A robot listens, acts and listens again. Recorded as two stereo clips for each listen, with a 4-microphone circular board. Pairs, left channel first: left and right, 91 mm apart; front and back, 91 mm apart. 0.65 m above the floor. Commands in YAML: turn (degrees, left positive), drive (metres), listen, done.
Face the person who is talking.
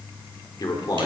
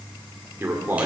turn: 115
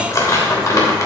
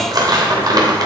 listen: true
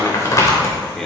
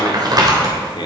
listen: true
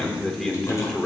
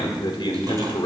done: "Found it: a man speaking, straight ahead, 2 to 4 m away."